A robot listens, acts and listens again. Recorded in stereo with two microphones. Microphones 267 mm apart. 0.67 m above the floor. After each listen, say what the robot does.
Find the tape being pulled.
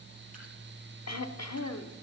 Keep listening.
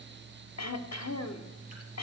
Keep listening.
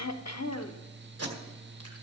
Turn 60° right.
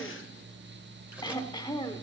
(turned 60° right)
Keep listening.
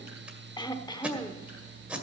Facing the tape being pulled.